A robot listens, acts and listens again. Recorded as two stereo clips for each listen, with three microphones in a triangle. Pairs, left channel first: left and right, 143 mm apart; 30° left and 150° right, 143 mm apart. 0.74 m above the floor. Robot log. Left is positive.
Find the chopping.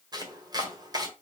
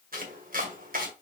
note: The chopping: 155° right.
cmd yaw -155
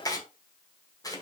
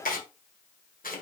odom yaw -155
note: The chopping is now 25° left.
cmd yaw +25
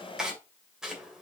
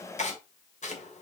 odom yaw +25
end: Found it: chopping, straight ahead, 1 to 2 m away.